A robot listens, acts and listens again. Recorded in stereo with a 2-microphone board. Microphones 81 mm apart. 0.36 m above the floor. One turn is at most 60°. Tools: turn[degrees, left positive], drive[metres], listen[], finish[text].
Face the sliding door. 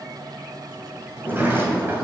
Thought: The sliding door: about 25° right or 155° right.
Action: turn[-25]
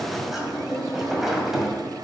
Action: finish[Facing the sliding door.]